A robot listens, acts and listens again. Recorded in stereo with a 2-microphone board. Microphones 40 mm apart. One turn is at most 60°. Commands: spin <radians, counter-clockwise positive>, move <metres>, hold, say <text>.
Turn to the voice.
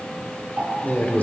spin 0.79
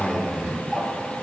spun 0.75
spin 0.17
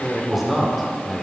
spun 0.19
say Facing the man speaking.